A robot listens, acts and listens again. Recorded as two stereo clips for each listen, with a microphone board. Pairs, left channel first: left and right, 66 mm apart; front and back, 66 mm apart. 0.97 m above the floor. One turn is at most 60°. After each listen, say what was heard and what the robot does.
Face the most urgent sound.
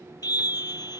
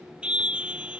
The scream: 105° left. Turn 60° left.
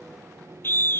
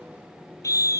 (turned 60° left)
The scream is now 35° left. Turn 35° left.
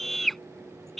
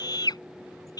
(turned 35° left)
Found it: a scream, straight ahead.